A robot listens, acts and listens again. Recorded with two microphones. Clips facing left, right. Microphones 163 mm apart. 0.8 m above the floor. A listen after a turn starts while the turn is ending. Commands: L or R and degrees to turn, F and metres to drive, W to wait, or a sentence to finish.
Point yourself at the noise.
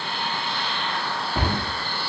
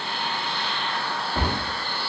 L15
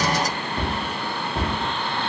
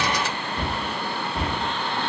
L155
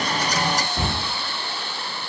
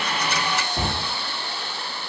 R15
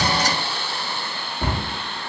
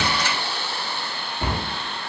Found it: a cupboard door, straight ahead.